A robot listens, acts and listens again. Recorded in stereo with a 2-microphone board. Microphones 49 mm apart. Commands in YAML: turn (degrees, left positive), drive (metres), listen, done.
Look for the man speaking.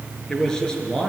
turn: 30
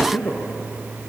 turn: 140
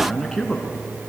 turn: 10
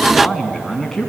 turn: 10
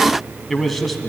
done: "Facing the man speaking."